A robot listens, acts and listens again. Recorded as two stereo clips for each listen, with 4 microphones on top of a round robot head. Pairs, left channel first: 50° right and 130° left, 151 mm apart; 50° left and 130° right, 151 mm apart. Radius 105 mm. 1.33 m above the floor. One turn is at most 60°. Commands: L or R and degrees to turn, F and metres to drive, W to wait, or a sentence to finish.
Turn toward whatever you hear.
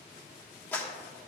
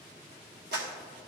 R60
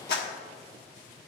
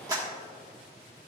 R60
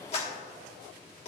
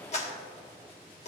Found it: a clap, straight ahead.